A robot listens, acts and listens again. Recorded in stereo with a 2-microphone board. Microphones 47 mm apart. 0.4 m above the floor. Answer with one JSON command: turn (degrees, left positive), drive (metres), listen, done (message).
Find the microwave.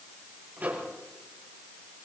{"turn": -35}
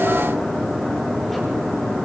{"listen": true}
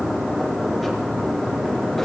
{"listen": true}
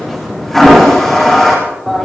{"done": "I heard a microwave, but can't make it out now. It was about straight ahead or 110° right."}